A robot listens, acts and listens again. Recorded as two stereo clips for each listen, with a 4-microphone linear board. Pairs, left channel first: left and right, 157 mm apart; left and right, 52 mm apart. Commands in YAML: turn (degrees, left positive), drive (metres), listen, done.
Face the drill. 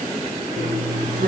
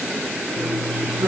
turn: -70
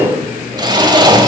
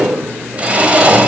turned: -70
turn: -30
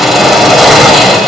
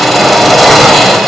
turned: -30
done: "Facing the drill."